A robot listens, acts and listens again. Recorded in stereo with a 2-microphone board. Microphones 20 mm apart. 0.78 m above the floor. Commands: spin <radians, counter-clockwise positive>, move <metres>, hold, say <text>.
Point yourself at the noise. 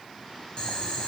spin 0.79
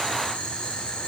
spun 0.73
spin 1.66
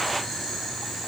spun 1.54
say Facing the boiling, over 4 m away.